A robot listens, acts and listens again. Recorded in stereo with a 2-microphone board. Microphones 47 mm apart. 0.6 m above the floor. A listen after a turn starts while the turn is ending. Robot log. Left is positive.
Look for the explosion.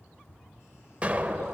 note: The explosion: about 30° right or 150° right.
cmd yaw -30
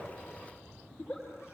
cmd idle
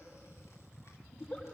end: I heard an explosion, but can't make it out now. It was about straight ahead or 120° right.